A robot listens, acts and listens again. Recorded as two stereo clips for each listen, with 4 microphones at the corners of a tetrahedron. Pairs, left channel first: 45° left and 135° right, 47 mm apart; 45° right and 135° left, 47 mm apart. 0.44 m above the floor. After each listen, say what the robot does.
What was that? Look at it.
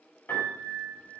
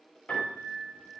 Turn 15° left.
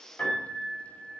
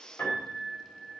Facing the piano, 2 to 4 m away.